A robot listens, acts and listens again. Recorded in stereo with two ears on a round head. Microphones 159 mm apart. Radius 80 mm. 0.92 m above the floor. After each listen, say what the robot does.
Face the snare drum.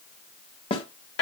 Turn 30° left.
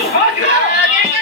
Keep listening.
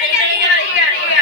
Keep listening.
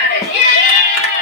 I heard a snare drum, but can't make it out now. It was about straight ahead or 120° left.